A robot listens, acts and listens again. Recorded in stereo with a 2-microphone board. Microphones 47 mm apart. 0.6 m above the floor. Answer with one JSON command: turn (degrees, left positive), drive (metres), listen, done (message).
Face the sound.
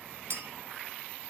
{"turn": -60}
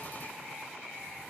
{"listen": true}
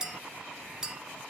{"turn": -15}
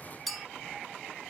{"done": "Found it: a clink, straight ahead, under 1 m away."}